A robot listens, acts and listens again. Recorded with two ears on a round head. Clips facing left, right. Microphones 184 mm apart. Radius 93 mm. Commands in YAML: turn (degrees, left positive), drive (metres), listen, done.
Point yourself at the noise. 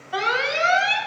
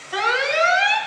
turn: -65
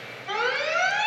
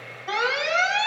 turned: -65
turn: -45
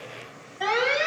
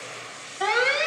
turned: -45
done: "Found it: an alarm, straight ahead."